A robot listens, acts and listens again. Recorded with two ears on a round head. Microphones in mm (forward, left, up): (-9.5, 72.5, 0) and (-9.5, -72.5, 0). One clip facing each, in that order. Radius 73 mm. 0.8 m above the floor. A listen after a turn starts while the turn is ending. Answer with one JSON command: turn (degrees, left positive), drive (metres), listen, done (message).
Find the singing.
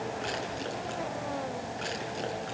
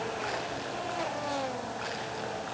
{"listen": true}
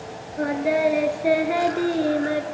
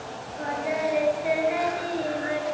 {"turn": 45}
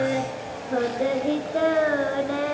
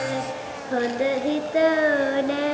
{"turn": -25}
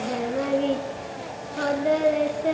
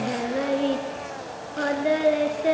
{"done": "Facing the singing, 2 to 4 m away."}